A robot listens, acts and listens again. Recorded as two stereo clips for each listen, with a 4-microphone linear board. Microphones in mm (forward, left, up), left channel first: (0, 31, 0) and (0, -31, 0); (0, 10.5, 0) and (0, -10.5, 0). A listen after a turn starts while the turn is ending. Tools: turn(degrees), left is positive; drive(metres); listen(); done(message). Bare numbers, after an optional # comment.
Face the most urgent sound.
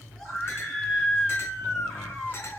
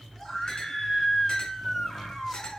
turn(30)
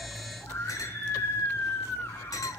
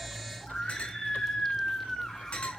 # So it is at 140° left.
turn(140)
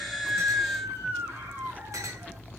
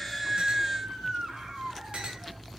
# The scream is now 30° right.
turn(-30)
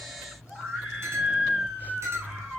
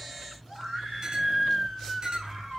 # The scream is now 10° right.
turn(-10)
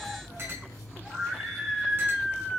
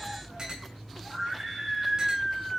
done("Facing the scream, over 4 m away.")